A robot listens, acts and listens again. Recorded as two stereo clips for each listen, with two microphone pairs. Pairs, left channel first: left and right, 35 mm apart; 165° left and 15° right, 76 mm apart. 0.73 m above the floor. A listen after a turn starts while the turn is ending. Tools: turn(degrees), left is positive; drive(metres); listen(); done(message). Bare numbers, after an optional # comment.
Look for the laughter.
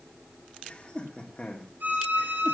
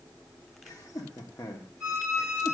# The laughter: 140° left.
turn(140)
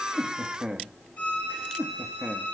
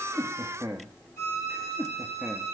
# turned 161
# The laughter is now 30° right.
turn(-30)
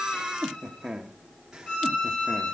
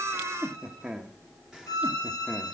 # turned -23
# The laughter is now 60° right.
turn(-60)
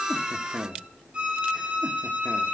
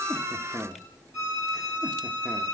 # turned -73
# The laughter is now 15° left.
turn(15)
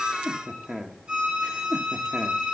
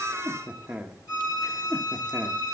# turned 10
done("Facing the laughter, 1 to 2 m away.")